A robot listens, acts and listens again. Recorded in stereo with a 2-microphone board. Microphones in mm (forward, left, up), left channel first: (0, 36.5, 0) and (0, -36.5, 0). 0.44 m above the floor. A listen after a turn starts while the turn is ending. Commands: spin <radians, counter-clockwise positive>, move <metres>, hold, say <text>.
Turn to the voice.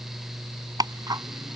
hold
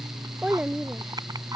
spin -0.52
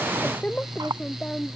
spin 0.26
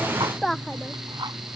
say Facing the child speaking.